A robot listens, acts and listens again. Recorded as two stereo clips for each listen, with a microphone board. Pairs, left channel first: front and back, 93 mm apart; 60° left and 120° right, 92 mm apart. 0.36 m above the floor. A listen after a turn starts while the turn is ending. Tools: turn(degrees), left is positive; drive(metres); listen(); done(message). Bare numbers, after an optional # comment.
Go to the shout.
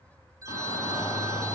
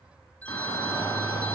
# The shout: 10° left.
turn(10)
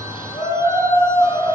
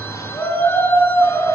drive(1.0)
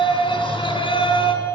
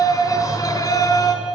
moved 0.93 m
# The shout is now 10° left.
turn(10)
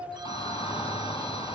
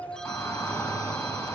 drive(1.0)
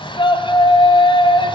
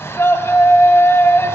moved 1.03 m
drive(1.0)
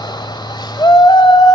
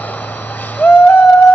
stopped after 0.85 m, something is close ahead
# The shout is now 10° right.
turn(-10)
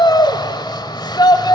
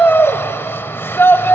done("Arrived at the shout, straight ahead.")